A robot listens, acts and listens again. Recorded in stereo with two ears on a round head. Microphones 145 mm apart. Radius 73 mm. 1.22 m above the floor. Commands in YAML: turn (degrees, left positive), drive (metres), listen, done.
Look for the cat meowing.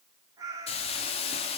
turn: -20
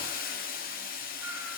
listen: true
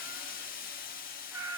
turn: -30
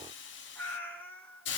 turn: 10
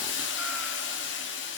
listen: true
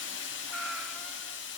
done: "Found it: a cat meowing, straight ahead, 2 to 4 m away."